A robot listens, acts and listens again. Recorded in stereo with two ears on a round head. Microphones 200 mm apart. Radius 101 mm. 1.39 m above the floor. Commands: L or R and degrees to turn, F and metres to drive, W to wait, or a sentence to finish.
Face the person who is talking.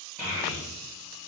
L30
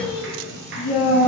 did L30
L120
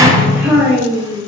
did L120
R15
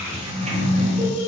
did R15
R10
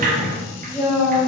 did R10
R10
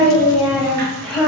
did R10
Found it: a child speaking, straight ahead.